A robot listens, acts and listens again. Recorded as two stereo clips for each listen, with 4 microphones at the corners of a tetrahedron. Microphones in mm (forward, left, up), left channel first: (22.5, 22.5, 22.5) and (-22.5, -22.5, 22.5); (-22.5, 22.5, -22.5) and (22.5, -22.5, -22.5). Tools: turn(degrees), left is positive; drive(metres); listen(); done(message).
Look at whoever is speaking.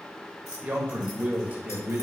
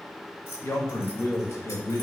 turn(degrees=165)
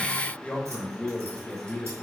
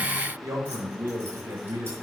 turn(degrees=-20)
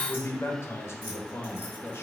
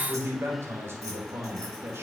done("Facing the man speaking, 1 to 2 m away.")